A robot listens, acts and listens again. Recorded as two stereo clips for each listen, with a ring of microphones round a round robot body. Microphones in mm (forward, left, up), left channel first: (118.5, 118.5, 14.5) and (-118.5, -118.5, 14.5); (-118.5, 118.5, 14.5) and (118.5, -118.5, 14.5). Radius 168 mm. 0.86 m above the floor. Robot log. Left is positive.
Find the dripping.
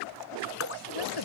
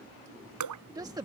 end: Facing the dripping.